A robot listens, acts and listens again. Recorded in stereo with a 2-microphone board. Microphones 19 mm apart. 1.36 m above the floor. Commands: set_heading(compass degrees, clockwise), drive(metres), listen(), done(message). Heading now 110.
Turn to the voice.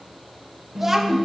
set_heading(140)
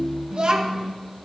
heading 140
set_heading(275)
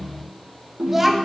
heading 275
set_heading(290)
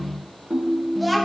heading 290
done("Facing the child speaking.")